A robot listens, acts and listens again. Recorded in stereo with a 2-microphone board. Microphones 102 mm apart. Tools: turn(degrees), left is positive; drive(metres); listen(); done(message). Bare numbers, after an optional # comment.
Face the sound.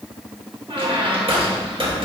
# The squeak: about 70° right or 110° right.
turn(-70)
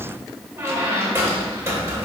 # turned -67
# So it is at 30° right.
turn(-30)
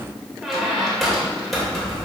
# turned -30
done("Found it: a squeak, straight ahead.")